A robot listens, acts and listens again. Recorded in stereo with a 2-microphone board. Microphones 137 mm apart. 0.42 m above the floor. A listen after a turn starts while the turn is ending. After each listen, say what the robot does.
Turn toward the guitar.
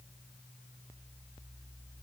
Keep listening.
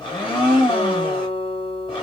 Turn 50° left.
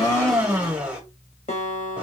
Turn 75° left.
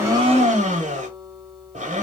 Keep listening.
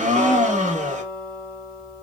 Turn 10° left.
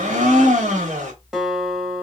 Facing the guitar, 1 to 2 m away.